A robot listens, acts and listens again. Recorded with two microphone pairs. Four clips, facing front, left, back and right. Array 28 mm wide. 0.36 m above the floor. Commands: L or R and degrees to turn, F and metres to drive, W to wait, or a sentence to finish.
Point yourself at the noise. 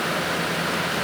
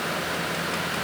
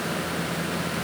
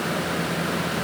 W
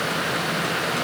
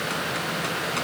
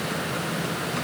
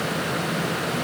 W
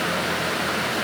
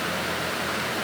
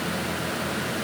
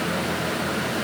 I can't make out anything to turn to.